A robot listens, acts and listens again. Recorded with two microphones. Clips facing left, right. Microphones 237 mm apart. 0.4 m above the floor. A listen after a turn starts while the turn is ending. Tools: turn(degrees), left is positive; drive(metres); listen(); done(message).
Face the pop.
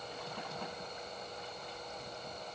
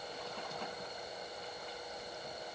listen()
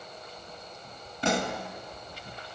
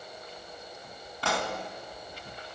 turn(degrees=20)
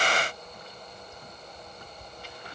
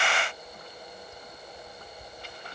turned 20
listen()
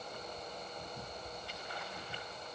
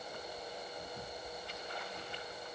done("I heard a pop, but can't make it out now. It was about straight ahead or 140° left.")